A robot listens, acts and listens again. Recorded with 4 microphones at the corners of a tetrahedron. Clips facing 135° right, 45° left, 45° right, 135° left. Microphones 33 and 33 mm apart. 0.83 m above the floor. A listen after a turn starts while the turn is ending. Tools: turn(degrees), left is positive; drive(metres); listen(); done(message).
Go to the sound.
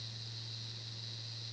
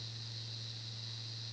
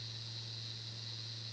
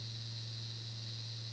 listen()
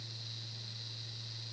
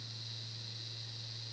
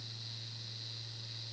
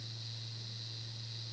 listen()
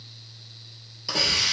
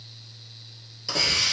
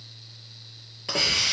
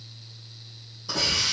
turn(degrees=-55)
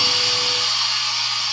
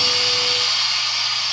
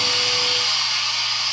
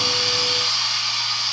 turn(degrees=-10)
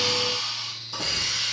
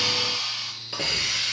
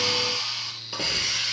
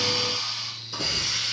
drive(metres=1.0)
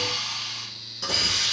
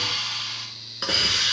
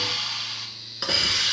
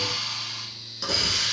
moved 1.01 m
drive(metres=1.0)
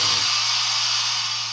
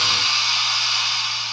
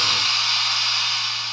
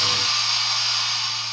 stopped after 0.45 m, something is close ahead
turn(degrees=10)
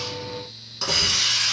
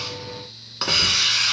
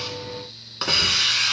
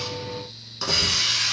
done("Arrived at the hiss, straight ahead.")